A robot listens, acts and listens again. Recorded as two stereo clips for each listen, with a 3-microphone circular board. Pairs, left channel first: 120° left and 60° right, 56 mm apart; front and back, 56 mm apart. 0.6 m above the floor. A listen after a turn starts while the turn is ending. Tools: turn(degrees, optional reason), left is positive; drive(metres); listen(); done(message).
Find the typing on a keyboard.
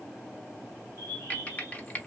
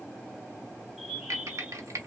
turn(degrees=180, reason="The typing on a keyboard: straight behind.")
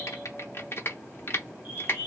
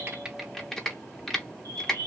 turn(degrees=80, reason="The typing on a keyboard is now 80° left.")
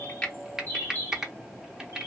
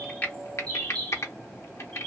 turn(degrees=20, reason="The typing on a keyboard is now 20° left.")
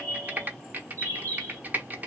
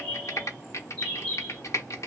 done("Facing the typing on a keyboard.")